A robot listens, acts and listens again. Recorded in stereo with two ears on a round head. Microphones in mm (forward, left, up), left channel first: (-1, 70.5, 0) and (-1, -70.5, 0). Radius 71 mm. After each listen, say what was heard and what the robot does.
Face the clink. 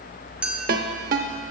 Turn 30° right.
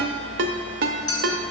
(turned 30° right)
So it is at 25° left. Turn 25° left.
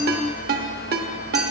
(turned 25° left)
Keep listening.
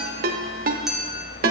Found it: a clink, straight ahead, 1 to 2 m away.